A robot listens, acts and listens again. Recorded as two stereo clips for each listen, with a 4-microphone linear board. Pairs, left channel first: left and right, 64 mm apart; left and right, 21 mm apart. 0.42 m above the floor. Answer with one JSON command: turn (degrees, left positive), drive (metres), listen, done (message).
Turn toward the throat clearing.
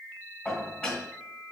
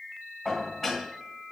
{"listen": true}
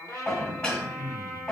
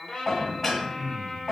{"turn": -55}
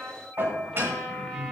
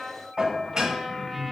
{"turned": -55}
{"done": "Facing the throat clearing, under 1 m away."}